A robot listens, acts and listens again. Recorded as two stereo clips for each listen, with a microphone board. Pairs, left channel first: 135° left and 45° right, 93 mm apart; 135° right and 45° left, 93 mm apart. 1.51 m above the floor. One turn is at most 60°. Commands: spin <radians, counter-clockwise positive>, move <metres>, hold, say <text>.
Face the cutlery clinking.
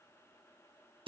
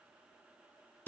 hold
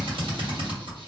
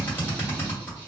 hold
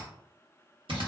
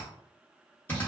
say I can't make out cutlery clinking, only a drill.